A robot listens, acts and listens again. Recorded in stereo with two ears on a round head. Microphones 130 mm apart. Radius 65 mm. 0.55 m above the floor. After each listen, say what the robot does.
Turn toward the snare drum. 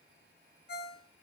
Keep listening.
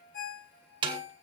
Turn 35° right.
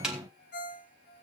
Found it: a snare drum, straight ahead, 2 to 4 m away.